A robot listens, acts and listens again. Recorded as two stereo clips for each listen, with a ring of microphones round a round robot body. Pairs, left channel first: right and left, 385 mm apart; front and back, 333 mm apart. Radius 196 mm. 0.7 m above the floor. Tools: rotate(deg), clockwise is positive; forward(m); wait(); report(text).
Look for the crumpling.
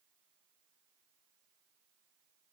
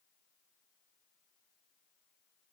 wait()
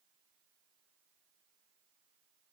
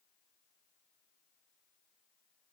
wait()
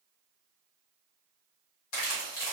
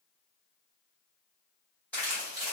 rotate(85)
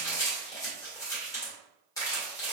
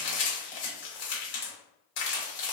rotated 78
rotate(10)
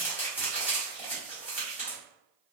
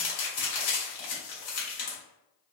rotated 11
report("Facing the crumpling.")